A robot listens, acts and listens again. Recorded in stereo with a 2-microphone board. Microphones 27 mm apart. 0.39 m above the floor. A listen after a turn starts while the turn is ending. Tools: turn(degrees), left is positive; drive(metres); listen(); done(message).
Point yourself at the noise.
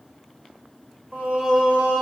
turn(degrees=-55)
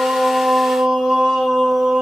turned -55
turn(degrees=-10)
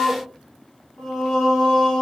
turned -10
turn(degrees=15)
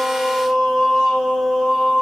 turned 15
done("Facing the singing.")